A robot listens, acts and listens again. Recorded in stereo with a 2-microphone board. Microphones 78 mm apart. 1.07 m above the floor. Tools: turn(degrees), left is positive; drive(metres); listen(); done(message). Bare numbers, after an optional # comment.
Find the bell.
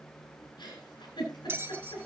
# The bell: about 30° right or 150° right.
turn(-30)
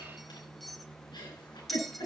done("Found it: a bell, straight ahead.")